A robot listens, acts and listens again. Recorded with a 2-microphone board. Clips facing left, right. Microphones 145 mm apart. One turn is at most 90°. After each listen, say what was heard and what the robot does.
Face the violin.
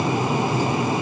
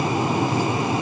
Keep listening.
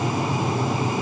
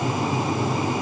Keep listening.
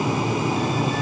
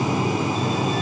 I can't make out a violin.